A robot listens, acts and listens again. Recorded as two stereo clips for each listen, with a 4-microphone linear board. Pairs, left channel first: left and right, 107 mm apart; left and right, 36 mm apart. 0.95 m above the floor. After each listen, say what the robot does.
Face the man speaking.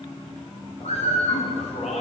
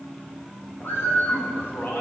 Turn 70° left.
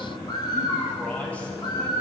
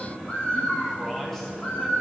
Keep listening.
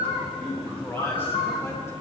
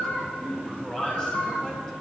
Turn 15° left.
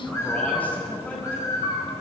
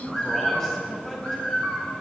Turn 10° left.
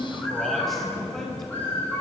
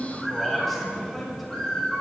Facing the man speaking.